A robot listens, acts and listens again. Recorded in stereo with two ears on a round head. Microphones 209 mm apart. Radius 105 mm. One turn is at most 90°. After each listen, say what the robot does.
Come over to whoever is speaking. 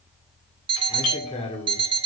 Turn 25° left.
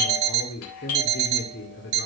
Turn 90° left.
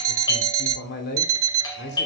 Turn 55° left.
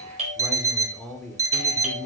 Drive 1.0 m forward.
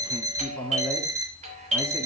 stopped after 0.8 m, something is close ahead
Turn 15° left.
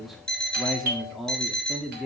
Arrived at the man speaking, straight ahead.